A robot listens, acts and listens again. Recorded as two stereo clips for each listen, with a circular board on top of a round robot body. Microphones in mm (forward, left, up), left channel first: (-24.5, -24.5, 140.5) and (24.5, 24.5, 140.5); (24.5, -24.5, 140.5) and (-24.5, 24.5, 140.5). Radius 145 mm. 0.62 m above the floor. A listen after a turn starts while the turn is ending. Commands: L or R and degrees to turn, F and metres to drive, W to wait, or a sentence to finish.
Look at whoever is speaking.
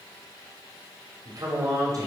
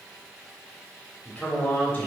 L30
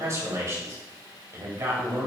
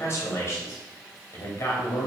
L10
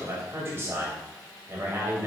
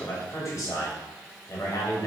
Facing the man speaking.